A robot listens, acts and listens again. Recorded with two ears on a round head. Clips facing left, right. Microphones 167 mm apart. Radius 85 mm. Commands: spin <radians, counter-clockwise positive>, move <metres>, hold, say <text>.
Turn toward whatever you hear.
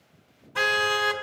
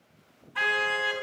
spin 0.96
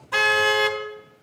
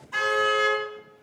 spin 1.22
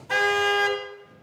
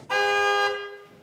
spin 0.17
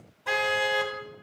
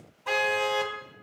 say Found it: a car horn, straight ahead, 2 to 4 m away.